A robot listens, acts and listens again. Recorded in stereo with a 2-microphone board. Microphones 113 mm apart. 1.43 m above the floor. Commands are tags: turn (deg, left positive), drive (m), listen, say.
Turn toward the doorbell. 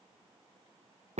<listen/>
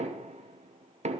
<listen/>
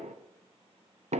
<say>I can't make out a doorbell to turn to.</say>